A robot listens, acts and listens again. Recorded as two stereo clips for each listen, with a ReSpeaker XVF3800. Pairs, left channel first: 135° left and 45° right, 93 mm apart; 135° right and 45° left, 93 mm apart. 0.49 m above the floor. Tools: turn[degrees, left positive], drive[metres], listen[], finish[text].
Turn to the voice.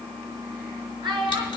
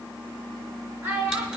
Thought: The child speaking: 20° right.
Action: turn[-20]
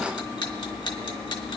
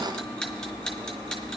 Action: listen[]
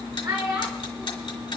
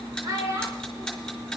Action: finish[Facing the child speaking.]